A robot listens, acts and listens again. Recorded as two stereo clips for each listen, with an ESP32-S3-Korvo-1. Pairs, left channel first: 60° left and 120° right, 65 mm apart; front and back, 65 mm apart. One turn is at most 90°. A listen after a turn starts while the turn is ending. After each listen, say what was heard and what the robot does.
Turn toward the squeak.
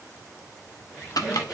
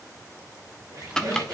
The squeak: 165° left. Turn 90° left.
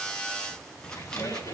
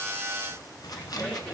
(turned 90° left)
The squeak is now 65° left. Turn 65° left.
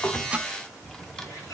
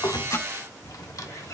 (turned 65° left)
Keep listening.
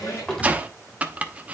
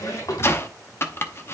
The squeak is now 30° left. Turn 30° left.
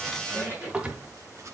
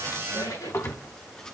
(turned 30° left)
Facing the squeak.